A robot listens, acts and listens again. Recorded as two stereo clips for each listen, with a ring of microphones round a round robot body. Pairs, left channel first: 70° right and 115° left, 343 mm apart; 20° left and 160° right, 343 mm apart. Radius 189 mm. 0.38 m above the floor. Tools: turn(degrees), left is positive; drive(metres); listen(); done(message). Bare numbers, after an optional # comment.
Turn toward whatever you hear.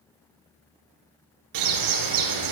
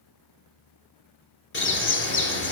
# The bird: 80° left.
turn(80)
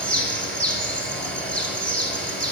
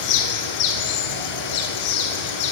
# The bird is now 20° left.
turn(20)
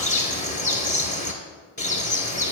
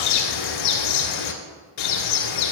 done("Facing the bird, 1 to 2 m away.")